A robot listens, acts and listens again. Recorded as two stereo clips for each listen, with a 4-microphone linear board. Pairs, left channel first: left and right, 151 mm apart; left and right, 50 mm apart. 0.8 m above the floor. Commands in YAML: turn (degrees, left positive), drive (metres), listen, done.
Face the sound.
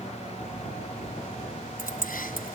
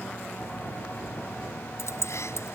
turn: 90
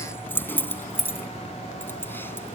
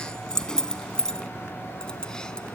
turn: 15
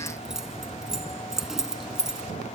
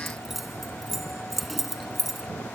done: "Found it: keys jangling, straight ahead."